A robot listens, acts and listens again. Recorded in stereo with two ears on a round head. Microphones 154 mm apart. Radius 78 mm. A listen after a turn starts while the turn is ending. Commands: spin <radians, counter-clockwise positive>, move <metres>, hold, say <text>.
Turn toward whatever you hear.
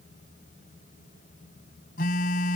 spin 0.96
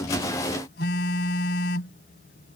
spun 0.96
spin 1.13
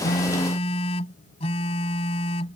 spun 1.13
spin 0.70
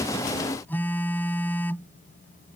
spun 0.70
spin 0.17
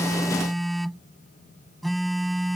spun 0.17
say Found it: a phone buzzing, straight ahead.